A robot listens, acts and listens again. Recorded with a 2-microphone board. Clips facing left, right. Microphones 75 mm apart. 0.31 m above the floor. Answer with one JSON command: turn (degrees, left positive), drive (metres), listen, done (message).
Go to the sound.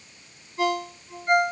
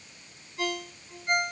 {"turn": 35}
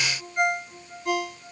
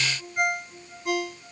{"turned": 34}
{"drive": 1.0}
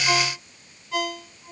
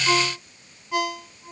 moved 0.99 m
{"drive": 1.0}
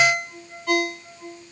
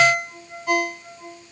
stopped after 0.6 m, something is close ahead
{"turn": -10}
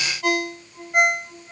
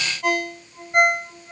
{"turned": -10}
{"done": "I am next to the ringtone."}